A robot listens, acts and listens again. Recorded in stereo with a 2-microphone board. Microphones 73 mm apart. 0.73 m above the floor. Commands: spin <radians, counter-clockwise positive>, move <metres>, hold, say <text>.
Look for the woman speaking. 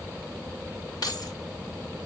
hold
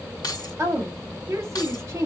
spin -0.70
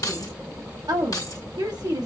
spin -1.66
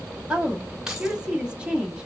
spin -0.26
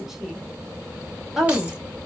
say Found it: a woman speaking, straight ahead, 1 to 2 m away.